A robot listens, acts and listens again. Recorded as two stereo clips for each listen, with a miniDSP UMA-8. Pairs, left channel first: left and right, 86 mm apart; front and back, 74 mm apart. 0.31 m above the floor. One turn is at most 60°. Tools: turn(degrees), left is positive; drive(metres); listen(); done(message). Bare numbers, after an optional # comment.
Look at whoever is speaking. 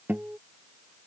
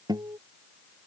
listen()
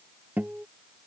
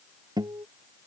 listen()
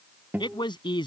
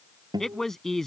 # The man speaking: 85° left.
turn(60)
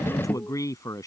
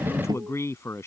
# The man speaking is now 45° left.
turn(45)
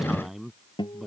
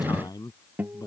done("Facing the man speaking.")